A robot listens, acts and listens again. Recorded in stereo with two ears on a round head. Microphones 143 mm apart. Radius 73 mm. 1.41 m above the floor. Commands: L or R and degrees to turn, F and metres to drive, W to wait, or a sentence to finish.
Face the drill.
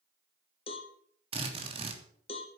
R40
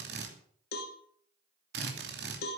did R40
R100
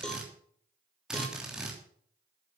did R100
Facing the drill.